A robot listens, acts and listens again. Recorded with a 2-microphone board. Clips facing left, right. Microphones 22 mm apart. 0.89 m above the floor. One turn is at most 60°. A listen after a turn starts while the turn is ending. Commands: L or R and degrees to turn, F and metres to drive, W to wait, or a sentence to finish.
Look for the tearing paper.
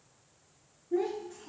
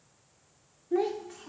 W
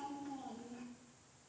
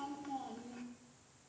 W
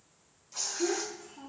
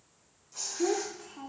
L30
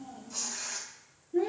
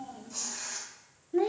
Facing the tearing paper.